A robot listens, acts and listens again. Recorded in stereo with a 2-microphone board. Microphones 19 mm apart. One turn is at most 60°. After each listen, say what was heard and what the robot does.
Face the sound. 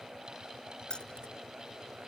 The keys jangling: about 55° left or 125° left. Turn 55° left.
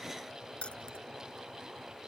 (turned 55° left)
So it is at 70° left. Turn 60° left.
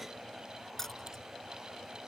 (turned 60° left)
The keys jangling is now 20° left. Turn 20° left.
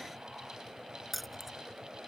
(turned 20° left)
Found it: keys jangling, straight ahead.